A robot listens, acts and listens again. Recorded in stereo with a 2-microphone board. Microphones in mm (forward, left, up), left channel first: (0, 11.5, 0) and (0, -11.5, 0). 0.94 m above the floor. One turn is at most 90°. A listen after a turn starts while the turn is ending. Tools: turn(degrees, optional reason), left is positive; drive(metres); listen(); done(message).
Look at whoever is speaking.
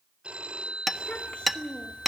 turn(degrees=90)
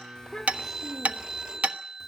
listen()
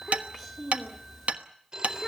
done("Facing the child speaking.")